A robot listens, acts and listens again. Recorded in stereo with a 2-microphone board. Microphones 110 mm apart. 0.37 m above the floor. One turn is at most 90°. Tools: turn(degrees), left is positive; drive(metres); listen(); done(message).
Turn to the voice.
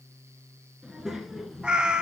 turn(degrees=30)
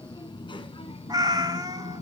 turn(degrees=90)
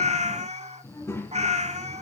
turn(degrees=15)
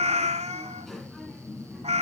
done("Facing the child speaking.")